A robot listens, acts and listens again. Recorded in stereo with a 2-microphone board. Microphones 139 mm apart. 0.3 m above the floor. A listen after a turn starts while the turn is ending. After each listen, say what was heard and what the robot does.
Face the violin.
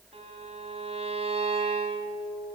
The violin: about 45° right or 135° right. Turn 45° right.
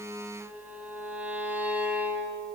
So it is at 15° right. Turn 15° right.
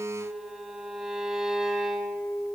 Found it: a violin, straight ahead, 1 to 2 m away.